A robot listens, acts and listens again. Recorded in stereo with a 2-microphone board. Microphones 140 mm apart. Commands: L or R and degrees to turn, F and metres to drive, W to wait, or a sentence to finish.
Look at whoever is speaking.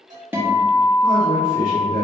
R75
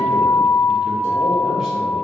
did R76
W
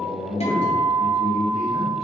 Facing the man speaking, 2 to 4 m away.